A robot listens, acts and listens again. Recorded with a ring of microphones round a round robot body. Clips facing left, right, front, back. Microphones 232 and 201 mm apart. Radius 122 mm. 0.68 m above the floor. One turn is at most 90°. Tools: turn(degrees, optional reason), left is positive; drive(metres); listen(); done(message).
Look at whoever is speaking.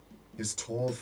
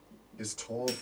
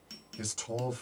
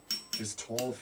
turn(degrees=30, reason="The man speaking: 30° left.")
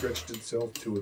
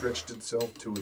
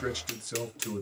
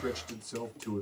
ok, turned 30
turn(degrees=-15, reason="The man speaking is now 15° right.")
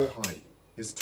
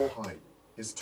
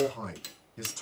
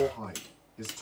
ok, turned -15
done("Facing the man speaking.")